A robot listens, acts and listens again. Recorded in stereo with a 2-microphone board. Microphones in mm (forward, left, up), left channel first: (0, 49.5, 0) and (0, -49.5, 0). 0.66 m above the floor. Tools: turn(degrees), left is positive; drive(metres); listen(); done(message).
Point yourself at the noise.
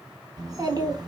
turn(degrees=-45)
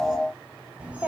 turn(degrees=-15)
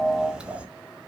turn(degrees=-15)
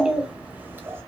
turn(degrees=-25)
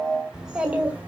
turn(degrees=-15)
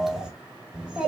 turn(degrees=-10)
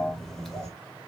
done("Found it: a child speaking, straight ahead.")